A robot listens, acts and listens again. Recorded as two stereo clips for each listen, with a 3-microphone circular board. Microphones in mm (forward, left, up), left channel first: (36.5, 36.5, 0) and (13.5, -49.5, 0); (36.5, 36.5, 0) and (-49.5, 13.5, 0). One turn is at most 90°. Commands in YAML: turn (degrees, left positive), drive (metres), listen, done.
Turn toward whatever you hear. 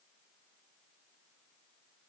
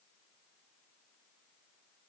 listen: true
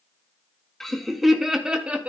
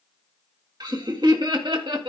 turn: 90
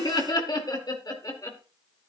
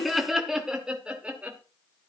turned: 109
turn: 90
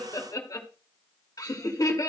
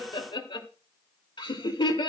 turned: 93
turn: 30
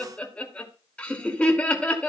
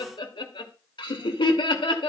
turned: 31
done: "Facing the laughter, 2 to 4 m away."